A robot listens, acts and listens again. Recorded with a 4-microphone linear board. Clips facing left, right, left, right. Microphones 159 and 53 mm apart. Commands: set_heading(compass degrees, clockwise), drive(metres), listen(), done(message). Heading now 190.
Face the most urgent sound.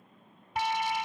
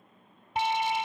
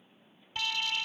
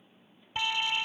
set_heading(215)
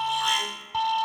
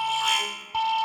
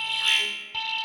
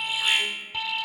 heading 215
done("Found it: an alarm, straight ahead.")